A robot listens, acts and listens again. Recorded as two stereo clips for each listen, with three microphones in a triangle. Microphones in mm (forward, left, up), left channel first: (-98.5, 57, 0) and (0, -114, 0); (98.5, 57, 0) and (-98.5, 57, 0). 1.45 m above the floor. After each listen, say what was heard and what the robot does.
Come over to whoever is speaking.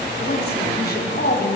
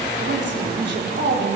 The woman speaking: 155° left. Turn 155° left.
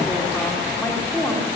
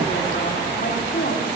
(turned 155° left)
The woman speaking is now 35° left. Turn 35° left.
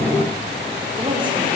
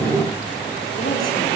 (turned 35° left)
Drive 1.0 m forward.
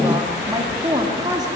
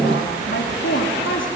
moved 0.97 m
The woman speaking is now 10° left. Turn 10° left.
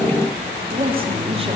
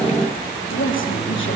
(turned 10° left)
Drive 1.0 m forward.
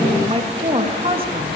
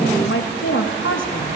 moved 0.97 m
Drive 1.0 m forward.
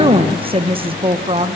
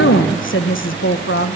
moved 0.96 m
Drive 1.0 m forward.
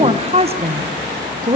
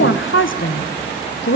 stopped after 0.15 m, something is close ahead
Arrived at the woman speaking, straight ahead.